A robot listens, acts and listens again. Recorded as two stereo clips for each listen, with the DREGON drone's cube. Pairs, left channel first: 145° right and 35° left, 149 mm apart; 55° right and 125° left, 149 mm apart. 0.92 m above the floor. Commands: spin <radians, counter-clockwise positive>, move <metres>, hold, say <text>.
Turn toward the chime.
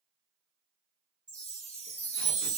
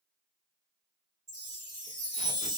spin 1.05
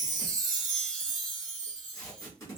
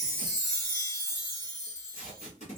spin 0.17
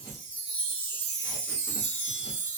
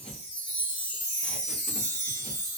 say Facing the chime, 1 to 2 m away.